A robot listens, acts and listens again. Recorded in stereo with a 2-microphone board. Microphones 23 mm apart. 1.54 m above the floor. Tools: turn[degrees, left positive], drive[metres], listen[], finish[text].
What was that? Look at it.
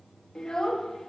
Thought: The child speaking: about 30° left or 150° left.
Action: turn[30]
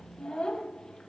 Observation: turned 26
Thought: The child speaking: about 35° left or 145° left.
Action: turn[35]
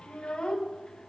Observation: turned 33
Thought: The child speaking: about 40° left or 140° left.
Action: turn[40]
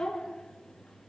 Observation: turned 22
Thought: The child speaking: about 35° left or 145° left.
Action: turn[35]
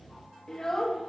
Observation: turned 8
Thought: The child speaking: about 15° left or 165° left.
Action: turn[15]
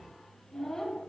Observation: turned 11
Thought: The child speaking: about 25° left or 155° left.
Action: turn[25]
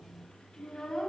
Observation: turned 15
Thought: The child speaking: about 35° left or 145° left.
Action: turn[35]
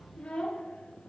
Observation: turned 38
Thought: So it is at 110° left.
Action: turn[110]
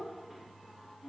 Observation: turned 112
Thought: The child speaking is now 10° right.
Action: turn[-10]
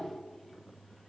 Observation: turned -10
Action: finish[Found it: a child speaking, straight ahead.]